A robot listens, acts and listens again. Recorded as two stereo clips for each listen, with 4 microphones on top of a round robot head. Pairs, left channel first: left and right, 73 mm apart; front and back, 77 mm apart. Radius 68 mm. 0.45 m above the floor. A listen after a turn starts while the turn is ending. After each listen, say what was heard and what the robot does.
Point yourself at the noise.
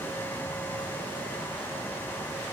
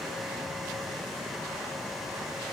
Keep listening.
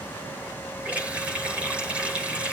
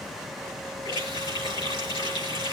The running tap: 20° right. Turn 20° right.
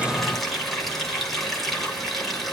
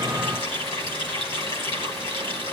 Facing the running tap, over 4 m away.